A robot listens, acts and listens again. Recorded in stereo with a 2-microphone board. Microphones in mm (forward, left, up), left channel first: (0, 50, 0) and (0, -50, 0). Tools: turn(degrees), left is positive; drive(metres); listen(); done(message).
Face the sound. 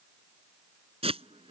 turn(degrees=-90)
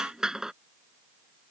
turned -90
done("Facing the hiss.")